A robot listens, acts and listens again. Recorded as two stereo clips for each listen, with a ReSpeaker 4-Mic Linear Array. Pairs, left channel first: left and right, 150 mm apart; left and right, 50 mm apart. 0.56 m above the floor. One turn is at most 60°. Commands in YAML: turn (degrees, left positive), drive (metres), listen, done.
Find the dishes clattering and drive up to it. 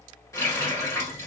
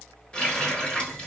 listen: true
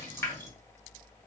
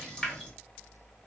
listen: true
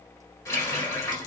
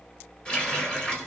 done: "I can't make out dishes clattering, only a running tap."